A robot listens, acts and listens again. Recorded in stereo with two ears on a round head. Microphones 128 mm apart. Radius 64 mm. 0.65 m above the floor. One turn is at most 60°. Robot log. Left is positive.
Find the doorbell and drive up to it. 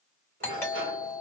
note: The doorbell: about 15° left or 165° left.
cmd yaw +15
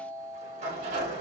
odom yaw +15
cmd fwd 1.0
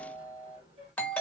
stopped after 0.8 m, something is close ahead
note: The doorbell is now 15° left.
cmd yaw +15
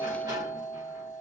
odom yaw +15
end: Arrived at the doorbell, straight ahead.